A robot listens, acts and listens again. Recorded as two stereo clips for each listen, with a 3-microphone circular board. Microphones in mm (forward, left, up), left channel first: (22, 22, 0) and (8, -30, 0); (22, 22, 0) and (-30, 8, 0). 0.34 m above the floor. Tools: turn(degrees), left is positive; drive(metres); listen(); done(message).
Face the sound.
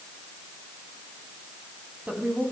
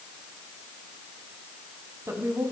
turn(degrees=-170)
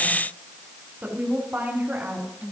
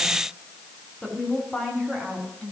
turn(degrees=-65)
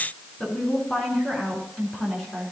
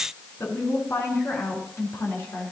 done("Found it: a woman speaking, straight ahead.")